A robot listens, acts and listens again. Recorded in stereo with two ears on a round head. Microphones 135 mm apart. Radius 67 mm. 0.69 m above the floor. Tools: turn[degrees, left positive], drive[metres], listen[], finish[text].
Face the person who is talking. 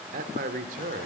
Thought: The man speaking: about 60° right or 120° right.
Action: turn[-60]
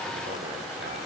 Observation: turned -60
Action: listen[]
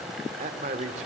Thought: So it is at 55° right.
Action: turn[-55]
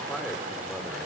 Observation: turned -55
Action: listen[]
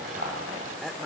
Action: finish[Facing the man speaking, 2 to 4 m away.]